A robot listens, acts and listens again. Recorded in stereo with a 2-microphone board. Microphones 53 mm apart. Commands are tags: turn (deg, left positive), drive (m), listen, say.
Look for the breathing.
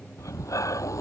<turn deg="90"/>
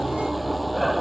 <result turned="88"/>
<say>Facing the breathing.</say>